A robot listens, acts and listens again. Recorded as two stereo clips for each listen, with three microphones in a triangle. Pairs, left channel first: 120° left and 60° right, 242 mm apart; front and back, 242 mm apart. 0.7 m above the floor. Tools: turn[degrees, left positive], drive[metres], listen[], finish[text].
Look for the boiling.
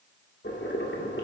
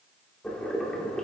Thought: The boiling: 85° left.
Action: turn[85]
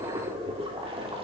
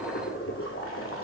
Action: finish[Found it: boiling, straight ahead, 2 to 4 m away.]